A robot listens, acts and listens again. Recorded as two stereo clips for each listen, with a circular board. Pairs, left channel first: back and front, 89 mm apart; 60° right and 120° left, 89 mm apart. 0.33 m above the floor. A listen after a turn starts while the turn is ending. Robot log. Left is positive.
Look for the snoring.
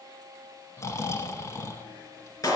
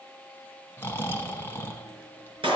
note: The snoring: 125° right.
cmd yaw -125
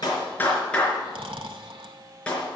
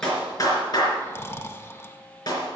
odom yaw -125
end: Facing the snoring, under 1 m away.